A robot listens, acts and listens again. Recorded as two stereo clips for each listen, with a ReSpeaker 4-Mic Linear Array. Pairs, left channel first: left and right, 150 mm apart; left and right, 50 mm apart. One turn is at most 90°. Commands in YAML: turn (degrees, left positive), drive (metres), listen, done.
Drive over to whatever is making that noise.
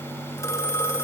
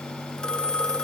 turn: 20
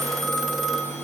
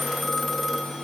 drive: 1.0
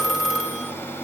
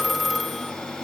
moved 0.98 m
drive: 1.0
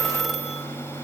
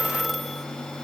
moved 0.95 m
drive: 1.0
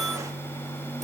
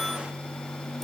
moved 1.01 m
listen: true
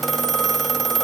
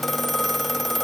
drive: 1.0
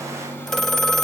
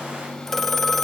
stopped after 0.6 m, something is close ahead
done: "Arrived at the phone ringing, straight ahead."